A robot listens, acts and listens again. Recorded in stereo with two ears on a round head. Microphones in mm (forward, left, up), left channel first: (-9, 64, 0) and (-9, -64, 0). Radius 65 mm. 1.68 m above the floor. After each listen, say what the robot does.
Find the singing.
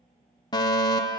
Keep listening.
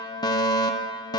Keep listening.
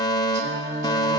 Turn 50° right.
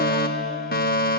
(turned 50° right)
Keep listening.
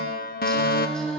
Found it: singing, straight ahead, over 4 m away.